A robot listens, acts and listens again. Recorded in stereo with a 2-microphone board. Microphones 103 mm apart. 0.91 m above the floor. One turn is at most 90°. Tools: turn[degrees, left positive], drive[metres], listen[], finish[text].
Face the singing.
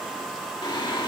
Thought: The singing: about 50° left or 130° left.
Action: turn[50]
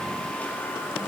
Thought: So it is at 25° left.
Action: turn[25]
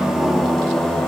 Thought: The singing is now 10° left.
Action: turn[10]
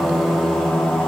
Thought: The singing is now 10° left.
Action: turn[10]
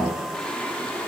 Thought: The singing is now 15° left.
Action: turn[15]
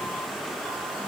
Action: listen[]
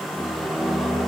Action: finish[Facing the singing, 2 to 4 m away.]